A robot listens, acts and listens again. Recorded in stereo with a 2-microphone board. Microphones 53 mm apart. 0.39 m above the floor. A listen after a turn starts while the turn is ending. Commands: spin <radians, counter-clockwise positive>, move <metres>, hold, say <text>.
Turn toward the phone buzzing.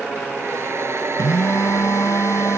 spin 1.22
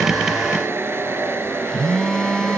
spin 0.26
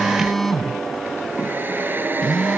say Facing the phone buzzing.